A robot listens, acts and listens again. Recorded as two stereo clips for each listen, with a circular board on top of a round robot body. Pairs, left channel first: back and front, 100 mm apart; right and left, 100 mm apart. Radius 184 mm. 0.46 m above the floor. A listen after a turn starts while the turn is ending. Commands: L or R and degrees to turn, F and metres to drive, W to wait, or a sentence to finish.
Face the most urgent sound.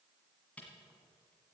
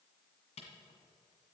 W
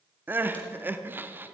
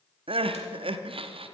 L70
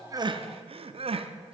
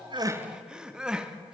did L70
L10
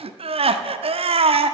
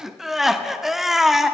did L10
Found it: crying, straight ahead, under 1 m away.